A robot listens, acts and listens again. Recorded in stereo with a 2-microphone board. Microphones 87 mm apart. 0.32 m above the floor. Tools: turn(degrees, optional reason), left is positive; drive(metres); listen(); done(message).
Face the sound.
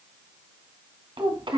turn(degrees=-70, reason="The child speaking: about 70° right or 110° right.")
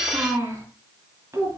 turn(degrees=-30, reason="So it is at 30° right.")
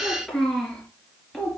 done("Found it: a child speaking, straight ahead.")